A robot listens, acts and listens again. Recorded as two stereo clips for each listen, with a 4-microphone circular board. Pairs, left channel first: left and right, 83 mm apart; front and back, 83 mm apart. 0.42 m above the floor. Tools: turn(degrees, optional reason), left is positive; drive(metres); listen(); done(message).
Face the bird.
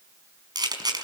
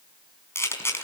listen()
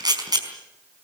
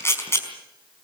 listen()
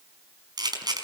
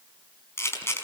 done("I can't make out a bird to turn to.")